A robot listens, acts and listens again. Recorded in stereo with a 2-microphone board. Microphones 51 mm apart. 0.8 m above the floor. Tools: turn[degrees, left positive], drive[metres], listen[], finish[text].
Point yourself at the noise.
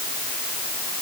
Action: listen[]
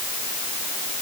Action: listen[]
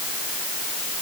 Action: finish[I can't make out anything.]